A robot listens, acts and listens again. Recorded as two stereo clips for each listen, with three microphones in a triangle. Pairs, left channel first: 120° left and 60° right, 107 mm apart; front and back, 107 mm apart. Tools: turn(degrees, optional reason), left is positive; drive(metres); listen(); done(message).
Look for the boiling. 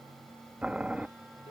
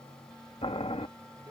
turn(degrees=20, reason="The boiling: 20° left.")
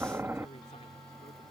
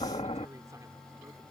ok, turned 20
done("Facing the boiling.")